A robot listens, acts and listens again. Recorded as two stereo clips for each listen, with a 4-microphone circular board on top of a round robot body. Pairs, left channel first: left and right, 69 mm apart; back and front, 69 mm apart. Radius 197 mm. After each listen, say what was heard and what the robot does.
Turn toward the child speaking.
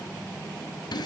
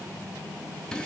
Keep listening.
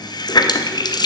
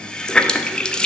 Keep listening.
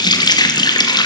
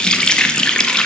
I can't make out a child speaking to turn to.